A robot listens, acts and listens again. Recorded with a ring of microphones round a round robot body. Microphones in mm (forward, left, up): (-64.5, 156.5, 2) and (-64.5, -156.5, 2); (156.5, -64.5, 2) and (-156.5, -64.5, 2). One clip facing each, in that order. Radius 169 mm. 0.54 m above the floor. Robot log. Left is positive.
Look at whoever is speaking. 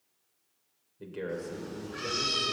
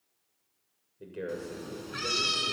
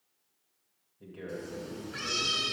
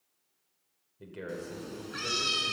note: The man speaking: 175° left.
cmd yaw +175
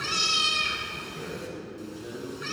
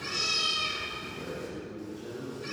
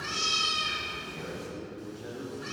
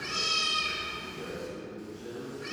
note: The man speaking is now 35° left.
cmd yaw +35
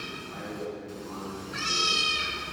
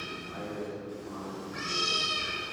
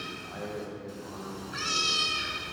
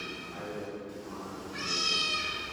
end: Facing the man speaking, over 4 m away.